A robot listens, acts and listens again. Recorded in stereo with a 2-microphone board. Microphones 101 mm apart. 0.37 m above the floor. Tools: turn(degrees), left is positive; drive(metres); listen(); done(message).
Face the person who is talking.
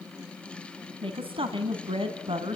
turn(degrees=-60)
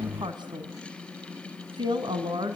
turn(degrees=-50)
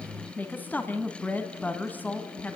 turn(degrees=15)
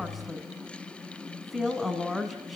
done("Facing the woman speaking.")